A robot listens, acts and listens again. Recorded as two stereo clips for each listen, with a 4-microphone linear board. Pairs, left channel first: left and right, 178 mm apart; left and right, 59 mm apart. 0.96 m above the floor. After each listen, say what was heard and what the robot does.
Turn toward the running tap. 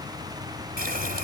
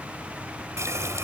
The running tap: about 60° right or 120° right. Turn 60° right.
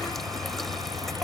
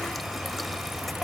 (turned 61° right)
Found it: a running tap, straight ahead.